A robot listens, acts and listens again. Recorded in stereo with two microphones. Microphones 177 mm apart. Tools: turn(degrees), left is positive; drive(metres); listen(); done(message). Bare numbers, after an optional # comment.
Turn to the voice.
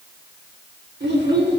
turn(-90)
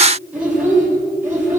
# So it is at 15° right.
turn(-15)
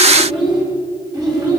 done("Found it: a child speaking, straight ahead.")